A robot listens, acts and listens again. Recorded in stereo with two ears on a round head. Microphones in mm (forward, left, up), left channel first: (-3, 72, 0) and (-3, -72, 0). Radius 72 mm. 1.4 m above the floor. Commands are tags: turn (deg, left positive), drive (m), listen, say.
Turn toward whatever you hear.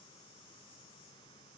<listen/>
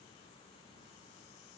<listen/>
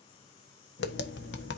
<turn deg="75"/>
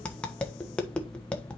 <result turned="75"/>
<turn deg="10"/>
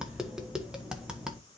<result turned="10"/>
<say>Found it: tapping, straight ahead, 1 to 2 m away.</say>